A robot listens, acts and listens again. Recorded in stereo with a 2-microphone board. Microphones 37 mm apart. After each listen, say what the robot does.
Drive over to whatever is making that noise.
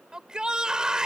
Turn 20° right.
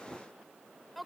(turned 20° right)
Drive 1.0 m forward.
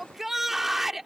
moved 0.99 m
Turn 10° right.
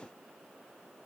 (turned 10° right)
Keep listening.
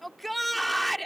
Drive 1.0 m forward.
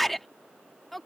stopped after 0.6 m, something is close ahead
Arrived at the shout, straight ahead.